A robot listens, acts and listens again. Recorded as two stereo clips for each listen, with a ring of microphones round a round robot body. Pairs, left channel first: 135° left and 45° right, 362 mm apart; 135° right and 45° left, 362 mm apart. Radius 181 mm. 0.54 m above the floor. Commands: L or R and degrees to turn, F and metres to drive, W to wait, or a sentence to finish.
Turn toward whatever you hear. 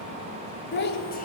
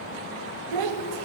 L70
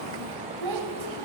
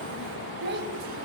R20
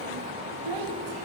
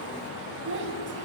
R15
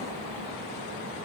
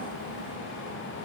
W
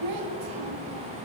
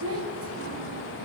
R10
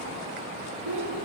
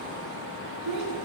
Facing the child speaking, 2 to 4 m away.